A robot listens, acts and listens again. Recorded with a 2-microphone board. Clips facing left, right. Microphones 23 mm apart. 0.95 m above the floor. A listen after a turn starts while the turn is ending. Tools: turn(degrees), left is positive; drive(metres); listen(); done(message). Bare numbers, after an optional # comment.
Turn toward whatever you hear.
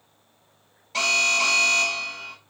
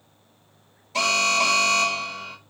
# The alarm: about 20° left or 160° left.
turn(20)
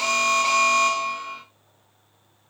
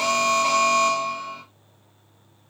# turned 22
# So it is at 140° left.
turn(140)
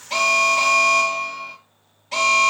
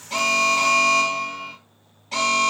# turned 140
done("Facing the alarm, 2 to 4 m away.")